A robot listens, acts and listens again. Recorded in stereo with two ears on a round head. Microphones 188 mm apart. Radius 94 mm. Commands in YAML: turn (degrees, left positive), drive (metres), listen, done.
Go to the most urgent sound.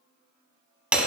listen: true
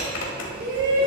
turn: -60
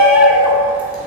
turn: -10
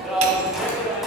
drive: 1.0
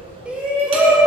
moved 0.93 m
drive: 1.0
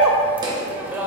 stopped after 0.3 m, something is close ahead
turn: -10
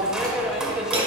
done: "Arrived at the shout, straight ahead."